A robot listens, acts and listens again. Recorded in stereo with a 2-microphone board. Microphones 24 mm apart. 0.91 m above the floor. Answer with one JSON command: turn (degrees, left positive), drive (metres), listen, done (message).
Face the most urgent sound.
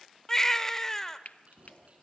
{"turn": 15}
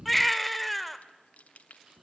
{"done": "Found it: a baby crying, straight ahead."}